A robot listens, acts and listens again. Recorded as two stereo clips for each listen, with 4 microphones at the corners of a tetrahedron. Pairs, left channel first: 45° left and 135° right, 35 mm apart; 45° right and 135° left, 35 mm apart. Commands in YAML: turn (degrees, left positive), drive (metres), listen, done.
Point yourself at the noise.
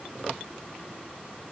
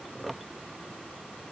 listen: true
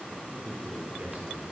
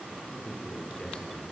turn: -105
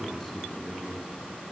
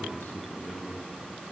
turn: -40
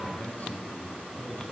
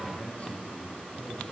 done: "Found it: a man speaking, straight ahead."